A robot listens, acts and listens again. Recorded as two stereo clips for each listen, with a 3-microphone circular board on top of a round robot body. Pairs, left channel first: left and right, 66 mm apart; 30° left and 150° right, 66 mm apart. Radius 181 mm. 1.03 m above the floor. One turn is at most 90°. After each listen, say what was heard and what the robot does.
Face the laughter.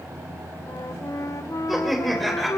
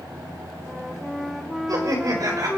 The laughter: straight behind. Turn 90° left.
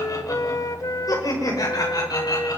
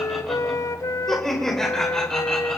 The laughter is now 110° left. Turn 90° left.
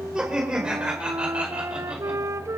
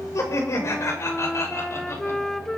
The laughter is now 15° right. Turn 15° right.
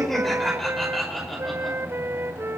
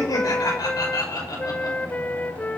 Facing the laughter.